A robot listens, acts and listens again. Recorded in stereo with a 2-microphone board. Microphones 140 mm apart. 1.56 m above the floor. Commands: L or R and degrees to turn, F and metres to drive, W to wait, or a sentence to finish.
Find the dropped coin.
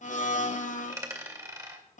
R25
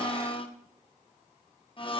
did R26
W
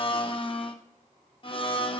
I heard a dropped coin, but can't make it out now. It was about 5° left or 130° right.